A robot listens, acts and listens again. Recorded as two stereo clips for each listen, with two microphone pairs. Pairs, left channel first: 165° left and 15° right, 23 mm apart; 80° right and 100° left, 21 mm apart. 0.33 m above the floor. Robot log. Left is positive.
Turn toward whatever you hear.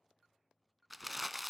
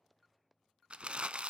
note: The crumpling: 70° left.
cmd yaw +70
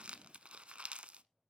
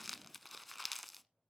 note: The crumpling is now 10° left.
cmd yaw +10
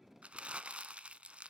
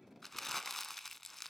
end: Found it: crumpling, straight ahead.